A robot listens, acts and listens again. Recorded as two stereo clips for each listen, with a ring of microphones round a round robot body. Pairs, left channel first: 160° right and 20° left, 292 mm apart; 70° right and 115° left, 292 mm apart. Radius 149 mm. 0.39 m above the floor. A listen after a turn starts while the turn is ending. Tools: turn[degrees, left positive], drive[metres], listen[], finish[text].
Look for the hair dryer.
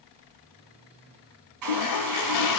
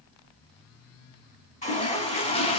Action: finish[Facing the hair dryer, 1 to 2 m away.]